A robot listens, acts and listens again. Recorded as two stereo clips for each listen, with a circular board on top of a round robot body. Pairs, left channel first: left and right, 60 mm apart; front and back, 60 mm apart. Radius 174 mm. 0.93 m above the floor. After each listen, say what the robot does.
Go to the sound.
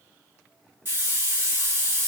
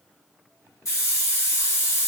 Turn 40° right.
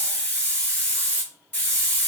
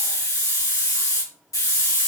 Turn 25° left.
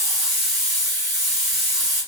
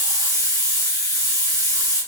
Drive 1.0 m forward.
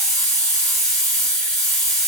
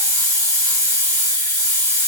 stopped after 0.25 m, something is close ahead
Something is in my way. I am facing the hiss but have not reached it.